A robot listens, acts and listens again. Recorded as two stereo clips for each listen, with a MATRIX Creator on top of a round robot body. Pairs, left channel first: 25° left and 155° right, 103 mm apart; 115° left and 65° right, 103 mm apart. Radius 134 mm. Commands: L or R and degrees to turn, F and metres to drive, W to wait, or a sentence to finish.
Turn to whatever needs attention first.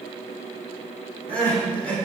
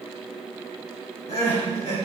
L100
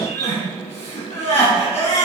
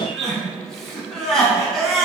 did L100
L25
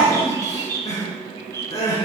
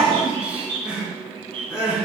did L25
L15
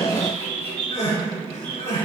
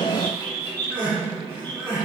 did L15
Facing the crying, over 4 m away.